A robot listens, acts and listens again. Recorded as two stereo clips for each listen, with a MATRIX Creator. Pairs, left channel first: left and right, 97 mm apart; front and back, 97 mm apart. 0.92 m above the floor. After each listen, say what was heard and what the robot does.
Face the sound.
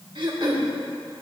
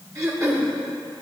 The throat clearing: 125° right. Turn 125° right.
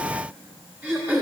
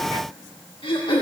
The throat clearing is now 20° right. Turn 20° right.
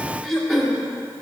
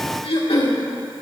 Found it: throat clearing, straight ahead.